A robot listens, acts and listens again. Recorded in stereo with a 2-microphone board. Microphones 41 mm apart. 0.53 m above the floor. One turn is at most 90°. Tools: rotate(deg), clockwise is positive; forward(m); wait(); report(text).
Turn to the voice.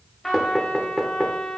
wait()
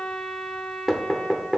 wait()
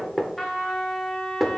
report("I can't make out anyone speaking, only knocking and a trumpet.")